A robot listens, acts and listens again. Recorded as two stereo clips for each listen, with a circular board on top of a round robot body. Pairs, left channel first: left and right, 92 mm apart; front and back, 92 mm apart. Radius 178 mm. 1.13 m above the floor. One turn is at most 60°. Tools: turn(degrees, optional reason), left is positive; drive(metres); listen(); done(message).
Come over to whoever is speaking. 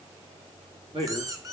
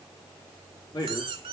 turn(degrees=-50, reason="The man speaking: 50° right.")
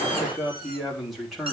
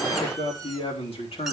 drive(metres=1.0)
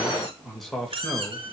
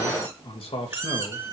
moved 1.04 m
drive(metres=1.0)
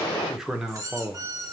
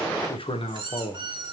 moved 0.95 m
drive(metres=1.0)
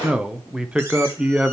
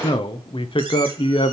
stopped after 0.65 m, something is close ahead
turn(degrees=-10, reason="The man speaking is now 10° right.")
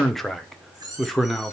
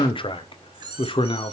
done("Arrived at the man speaking, straight ahead.")